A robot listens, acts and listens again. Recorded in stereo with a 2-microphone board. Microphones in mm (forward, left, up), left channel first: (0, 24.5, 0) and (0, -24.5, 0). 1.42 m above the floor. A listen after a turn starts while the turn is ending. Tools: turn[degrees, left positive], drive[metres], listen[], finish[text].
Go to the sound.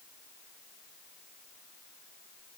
Action: listen[]
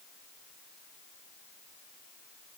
Action: listen[]
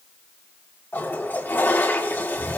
Thought: The toilet flushing: about 45° left or 135° left.
Action: turn[45]
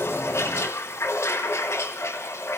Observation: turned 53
Thought: So it is at 80° left.
Action: turn[80]
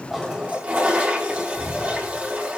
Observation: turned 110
Thought: The toilet flushing is now 30° right.
Action: turn[-30]
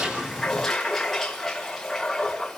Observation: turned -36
Action: drive[1.0]
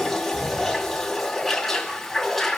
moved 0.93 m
Action: drive[1.0]
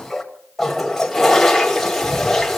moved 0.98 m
Action: drive[1.0]
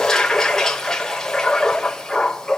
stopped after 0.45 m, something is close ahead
Thought: The toilet flushing is now 15° left.
Action: turn[15]
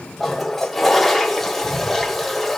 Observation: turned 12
Action: finish[I am next to the toilet flushing.]